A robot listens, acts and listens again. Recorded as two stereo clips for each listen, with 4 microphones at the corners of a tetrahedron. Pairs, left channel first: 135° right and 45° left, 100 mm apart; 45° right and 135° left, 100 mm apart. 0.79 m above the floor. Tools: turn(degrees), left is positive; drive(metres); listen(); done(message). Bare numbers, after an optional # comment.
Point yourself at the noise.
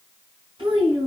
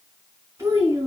# The child speaking: 75° left.
turn(75)
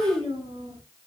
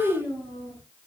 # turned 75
done("Found it: a child speaking, straight ahead.")